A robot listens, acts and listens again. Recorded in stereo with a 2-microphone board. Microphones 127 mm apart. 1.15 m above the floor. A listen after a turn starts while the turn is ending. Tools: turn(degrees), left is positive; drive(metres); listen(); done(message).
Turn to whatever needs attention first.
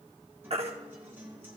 turn(degrees=-55)
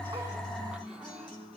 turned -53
listen()
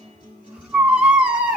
turn(degrees=-10)
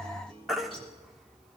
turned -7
done("Facing the baby crying.")